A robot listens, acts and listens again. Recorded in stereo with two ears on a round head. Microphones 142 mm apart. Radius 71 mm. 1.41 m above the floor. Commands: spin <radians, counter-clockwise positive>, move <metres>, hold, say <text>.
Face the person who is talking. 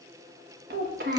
spin -1.13
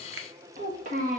spin -0.87
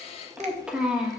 say Facing the child speaking, 1 to 2 m away.